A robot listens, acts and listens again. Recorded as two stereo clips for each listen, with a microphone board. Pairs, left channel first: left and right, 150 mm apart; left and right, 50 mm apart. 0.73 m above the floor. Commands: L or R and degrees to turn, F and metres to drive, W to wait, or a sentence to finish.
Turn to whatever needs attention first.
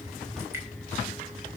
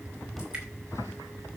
W
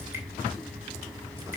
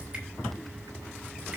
W
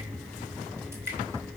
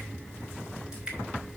I can't make out anything urgent to turn to.